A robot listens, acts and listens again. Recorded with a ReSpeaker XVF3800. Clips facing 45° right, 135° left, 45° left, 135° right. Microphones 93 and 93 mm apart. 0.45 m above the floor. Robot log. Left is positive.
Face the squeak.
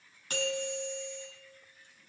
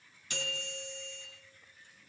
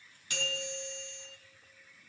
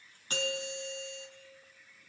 cmd idle
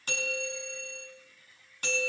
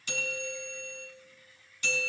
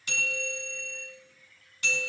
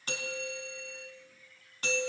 cmd idle
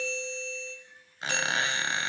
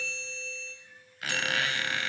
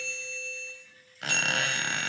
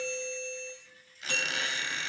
note: The squeak: 20° left.
cmd yaw +20
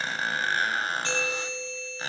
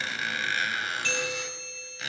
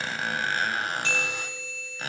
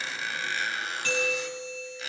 note: The squeak is now 10° left.
cmd yaw +10
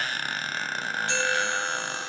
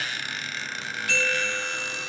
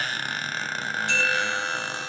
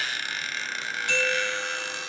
end: Facing the squeak.